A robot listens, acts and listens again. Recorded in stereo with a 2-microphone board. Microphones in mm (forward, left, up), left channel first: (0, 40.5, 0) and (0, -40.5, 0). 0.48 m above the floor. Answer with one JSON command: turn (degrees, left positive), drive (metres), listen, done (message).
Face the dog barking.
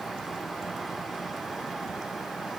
{"listen": true}
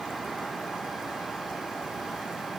{"listen": true}
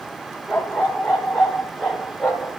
{"turn": -30}
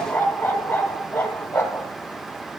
{"turn": 20}
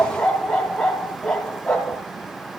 {"done": "Facing the dog barking."}